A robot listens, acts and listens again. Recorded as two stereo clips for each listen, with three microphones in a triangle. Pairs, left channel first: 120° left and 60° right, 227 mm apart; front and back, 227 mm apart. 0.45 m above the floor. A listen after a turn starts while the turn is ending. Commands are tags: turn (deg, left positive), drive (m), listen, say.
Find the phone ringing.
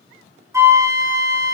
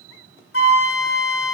<listen/>
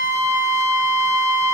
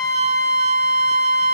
<listen/>
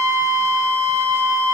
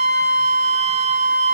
<say>I can't make out a phone ringing to turn to.</say>